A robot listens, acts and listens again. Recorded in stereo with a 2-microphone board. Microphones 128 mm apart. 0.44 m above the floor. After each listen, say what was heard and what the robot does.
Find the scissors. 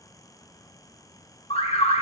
Keep listening.
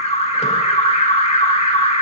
Keep listening.
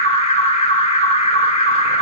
I can't make out scissors, only an alarm.